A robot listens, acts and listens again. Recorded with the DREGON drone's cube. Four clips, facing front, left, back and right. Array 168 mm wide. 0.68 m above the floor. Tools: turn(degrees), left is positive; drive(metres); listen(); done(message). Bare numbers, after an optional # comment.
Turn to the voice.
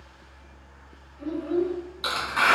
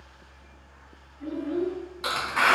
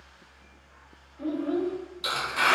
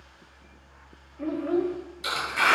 # The child speaking: 110° right.
turn(-110)
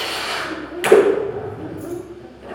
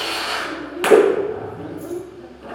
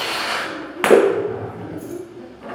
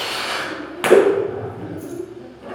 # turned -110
# The child speaking is now 25° left.
turn(25)
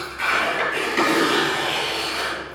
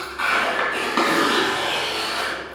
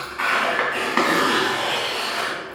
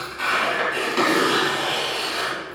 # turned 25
listen()
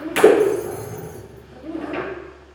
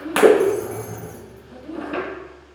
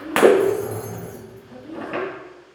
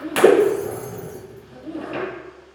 # The child speaking is now 10° right.
turn(-10)
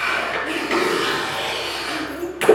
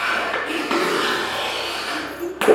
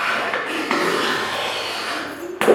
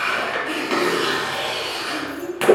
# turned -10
done("Found it: a child speaking, straight ahead, 1 to 2 m away.")